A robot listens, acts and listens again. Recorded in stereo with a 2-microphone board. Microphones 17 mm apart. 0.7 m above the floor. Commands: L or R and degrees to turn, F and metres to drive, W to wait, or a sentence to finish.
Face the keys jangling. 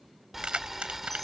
R90
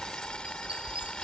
W
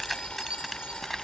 Facing the keys jangling.